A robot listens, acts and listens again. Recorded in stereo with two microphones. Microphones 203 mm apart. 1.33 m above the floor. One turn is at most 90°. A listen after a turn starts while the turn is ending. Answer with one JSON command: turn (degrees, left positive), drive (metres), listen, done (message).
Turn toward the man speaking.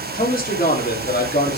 {"turn": 55}
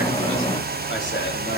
{"listen": true}
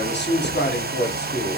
{"turn": 50}
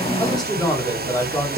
{"turn": 15}
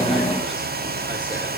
{"listen": true}
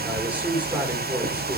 {"turn": -10}
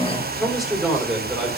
{"done": "Found it: a man speaking, straight ahead."}